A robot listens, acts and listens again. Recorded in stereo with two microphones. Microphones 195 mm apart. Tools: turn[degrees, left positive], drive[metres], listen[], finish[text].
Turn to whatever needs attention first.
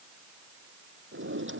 Action: listen[]
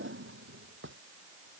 Action: listen[]
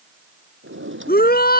Thought: The shout: about 50° left or 130° left.
Action: turn[50]
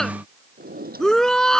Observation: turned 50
Action: finish[Found it: a shout, straight ahead.]